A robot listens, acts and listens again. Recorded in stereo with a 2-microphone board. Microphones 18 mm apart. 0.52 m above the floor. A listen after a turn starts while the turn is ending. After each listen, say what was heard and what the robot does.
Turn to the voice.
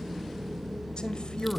The man speaking: about 65° left or 115° left. Turn 65° left.
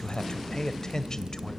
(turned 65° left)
So it is at 45° left. Turn 45° left.
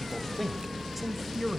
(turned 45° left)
Found it: a man speaking, straight ahead, 1 to 2 m away.